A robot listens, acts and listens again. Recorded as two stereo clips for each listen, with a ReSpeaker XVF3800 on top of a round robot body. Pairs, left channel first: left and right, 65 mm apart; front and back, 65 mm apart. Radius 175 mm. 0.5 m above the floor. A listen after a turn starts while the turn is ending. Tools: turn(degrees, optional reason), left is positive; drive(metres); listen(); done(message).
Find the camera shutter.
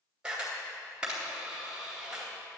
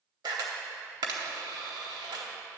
turn(degrees=-170, reason="The camera shutter: 170° right.")
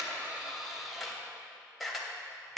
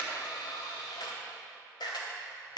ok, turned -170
done("Found it: a camera shutter, straight ahead.")